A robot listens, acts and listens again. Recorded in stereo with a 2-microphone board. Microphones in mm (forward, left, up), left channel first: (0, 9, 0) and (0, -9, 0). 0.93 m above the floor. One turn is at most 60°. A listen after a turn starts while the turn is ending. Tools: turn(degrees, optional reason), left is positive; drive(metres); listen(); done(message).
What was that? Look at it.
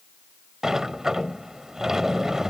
turn(degrees=-35, reason="The sliding door: about 35° right or 145° right.")
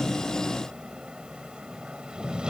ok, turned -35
turn(degrees=-60, reason="So it is at 105° right.")
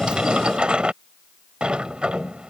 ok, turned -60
turn(degrees=-60, reason="The sliding door is now 80° right.")
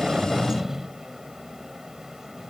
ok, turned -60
turn(degrees=-20, reason="The sliding door is now 20° right.")
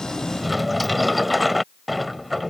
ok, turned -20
done("Found it: a sliding door, straight ahead.")